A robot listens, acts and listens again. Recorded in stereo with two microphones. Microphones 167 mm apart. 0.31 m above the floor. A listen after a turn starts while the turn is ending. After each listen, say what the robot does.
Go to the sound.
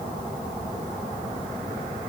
Keep listening.
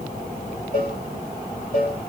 Turn 55° left.
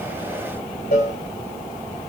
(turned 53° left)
Turn 70° left.
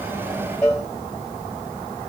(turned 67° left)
Drive 1.0 m forward.
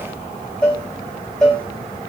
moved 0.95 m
Drive 1.0 m forward.
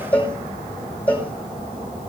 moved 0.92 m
Turn 10° left.
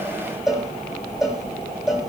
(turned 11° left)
Drive 1.0 m forward.
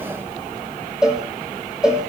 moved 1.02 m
Drive 1.0 m forward.
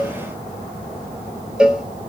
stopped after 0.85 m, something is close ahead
I am next to the cowbell.